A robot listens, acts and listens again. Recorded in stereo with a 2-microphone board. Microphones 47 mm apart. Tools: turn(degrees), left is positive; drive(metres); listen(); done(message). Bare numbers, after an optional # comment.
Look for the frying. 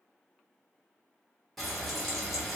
turn(30)
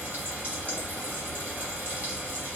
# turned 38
# So it is at 40° right.
turn(-40)
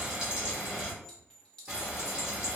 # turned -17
# The frying is now 20° right.
turn(-20)
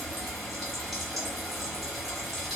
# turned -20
done("Facing the frying.")